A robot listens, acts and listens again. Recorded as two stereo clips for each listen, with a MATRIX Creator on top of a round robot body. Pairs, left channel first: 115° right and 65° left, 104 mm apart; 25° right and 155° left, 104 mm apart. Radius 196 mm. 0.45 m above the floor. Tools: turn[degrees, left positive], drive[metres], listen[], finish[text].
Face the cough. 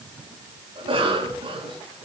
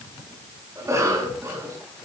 Thought: The cough: 100° left.
Action: turn[100]
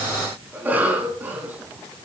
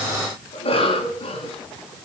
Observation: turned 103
Action: finish[Found it: a cough, straight ahead.]